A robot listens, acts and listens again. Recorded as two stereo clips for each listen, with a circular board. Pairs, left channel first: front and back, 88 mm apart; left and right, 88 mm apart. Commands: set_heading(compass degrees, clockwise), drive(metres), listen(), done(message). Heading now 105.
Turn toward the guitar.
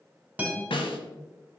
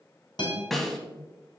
set_heading(355)
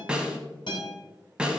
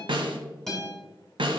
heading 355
done("Facing the guitar, 2 to 4 m away.")